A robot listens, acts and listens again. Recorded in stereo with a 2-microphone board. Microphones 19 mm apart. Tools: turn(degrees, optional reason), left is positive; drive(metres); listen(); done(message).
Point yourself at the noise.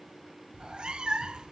turn(degrees=-50, reason="The cat meowing: about 50° right or 130° right.")
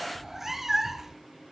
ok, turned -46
turn(degrees=-15, reason="So it is at 15° right.")
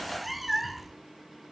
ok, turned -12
done("Facing the cat meowing.")